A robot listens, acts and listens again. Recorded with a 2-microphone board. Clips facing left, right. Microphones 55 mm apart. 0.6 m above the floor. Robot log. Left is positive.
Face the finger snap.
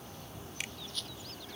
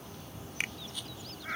note: The finger snap: about 45° right or 135° right.
cmd yaw -45
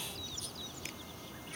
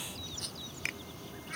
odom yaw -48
cmd idle
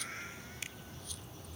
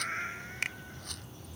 note: So it is at 85° right.
cmd yaw -85
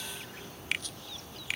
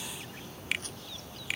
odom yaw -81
end: Facing the finger snap.